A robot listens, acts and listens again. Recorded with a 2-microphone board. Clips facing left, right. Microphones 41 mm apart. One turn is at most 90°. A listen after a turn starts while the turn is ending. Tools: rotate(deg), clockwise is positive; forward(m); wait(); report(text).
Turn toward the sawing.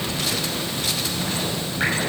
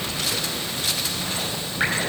wait()
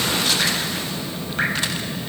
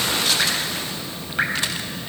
wait()
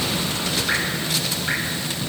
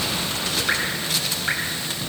report("I can't make out sawing to turn to.")